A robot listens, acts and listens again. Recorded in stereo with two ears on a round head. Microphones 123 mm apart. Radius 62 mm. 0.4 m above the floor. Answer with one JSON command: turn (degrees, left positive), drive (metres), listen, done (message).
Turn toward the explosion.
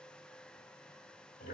{"listen": true}
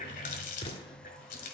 {"turn": 40}
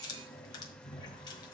{"listen": true}
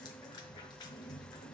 {"done": "I heard an explosion, but can't make it out now. It was about straight ahead or 100° left."}